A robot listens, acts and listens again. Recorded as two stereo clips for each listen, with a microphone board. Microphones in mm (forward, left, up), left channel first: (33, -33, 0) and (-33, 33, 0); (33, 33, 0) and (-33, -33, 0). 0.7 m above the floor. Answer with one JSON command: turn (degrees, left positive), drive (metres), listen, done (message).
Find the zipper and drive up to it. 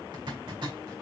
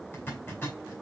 {"turn": 110}
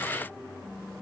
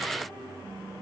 {"listen": true}
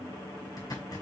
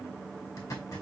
{"drive": 1.0}
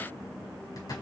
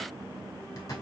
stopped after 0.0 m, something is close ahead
{"done": "Blocked. The zipper is further on, straight ahead."}